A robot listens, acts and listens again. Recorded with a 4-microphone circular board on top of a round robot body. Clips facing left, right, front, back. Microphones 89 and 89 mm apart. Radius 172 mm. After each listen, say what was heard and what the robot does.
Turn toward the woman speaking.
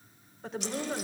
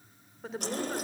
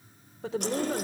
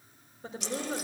Found it: a woman speaking, straight ahead, 2 to 4 m away.